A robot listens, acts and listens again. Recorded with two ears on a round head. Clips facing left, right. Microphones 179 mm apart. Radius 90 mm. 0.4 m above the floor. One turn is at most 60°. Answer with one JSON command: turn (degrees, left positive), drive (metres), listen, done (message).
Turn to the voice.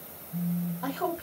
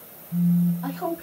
{"turn": 60}
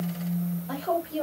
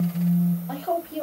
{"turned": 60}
{"turn": 15}
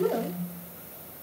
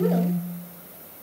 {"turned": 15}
{"listen": true}
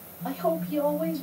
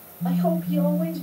{"listen": true}
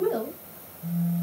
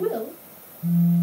{"done": "Facing the woman speaking."}